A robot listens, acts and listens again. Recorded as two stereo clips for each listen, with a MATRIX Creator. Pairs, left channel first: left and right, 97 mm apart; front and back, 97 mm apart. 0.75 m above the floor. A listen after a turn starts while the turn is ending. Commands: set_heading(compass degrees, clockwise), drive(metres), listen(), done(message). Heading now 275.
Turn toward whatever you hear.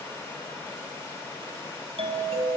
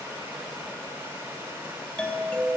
set_heading(355)
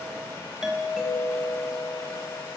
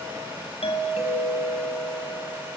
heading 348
done("Facing the doorbell.")